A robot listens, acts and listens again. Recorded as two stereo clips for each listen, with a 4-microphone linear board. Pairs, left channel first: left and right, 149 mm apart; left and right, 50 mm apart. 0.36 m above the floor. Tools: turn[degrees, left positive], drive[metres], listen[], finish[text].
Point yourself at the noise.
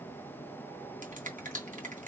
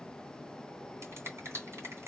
Thought: The finger snap: about 60° right or 120° right.
Action: turn[-60]
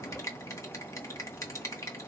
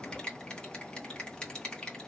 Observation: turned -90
Thought: So it is at 20° left.
Action: turn[20]
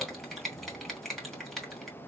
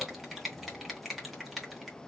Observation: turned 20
Action: finish[Facing the finger snap, 2 to 4 m away.]